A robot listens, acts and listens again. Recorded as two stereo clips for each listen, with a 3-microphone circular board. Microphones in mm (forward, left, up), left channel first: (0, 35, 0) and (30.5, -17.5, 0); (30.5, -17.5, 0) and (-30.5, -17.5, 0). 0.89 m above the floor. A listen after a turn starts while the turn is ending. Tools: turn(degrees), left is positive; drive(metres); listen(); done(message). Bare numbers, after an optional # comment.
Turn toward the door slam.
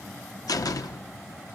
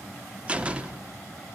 # The door slam: 110° left.
turn(110)
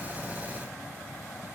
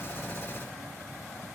done("I heard a door slam from this way, but can't make it out now.")